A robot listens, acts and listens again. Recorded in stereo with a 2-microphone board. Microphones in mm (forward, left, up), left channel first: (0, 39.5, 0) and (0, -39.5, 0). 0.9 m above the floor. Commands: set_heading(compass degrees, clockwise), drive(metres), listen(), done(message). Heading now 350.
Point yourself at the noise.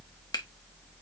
set_heading(295)
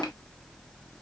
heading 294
listen()
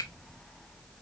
listen()
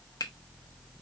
set_heading(229)
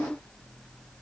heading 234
listen()
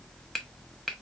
done("Facing the finger snap, 1 to 2 m away.")